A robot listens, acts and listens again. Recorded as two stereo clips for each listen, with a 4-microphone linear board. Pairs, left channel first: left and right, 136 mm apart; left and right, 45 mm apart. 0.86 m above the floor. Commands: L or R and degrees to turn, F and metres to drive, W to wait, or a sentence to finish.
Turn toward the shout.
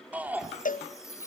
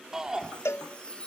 R30
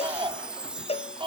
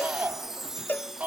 R135
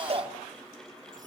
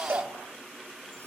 R40
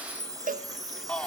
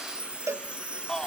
L10
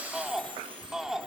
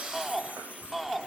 Found it: a shout, straight ahead, 2 to 4 m away.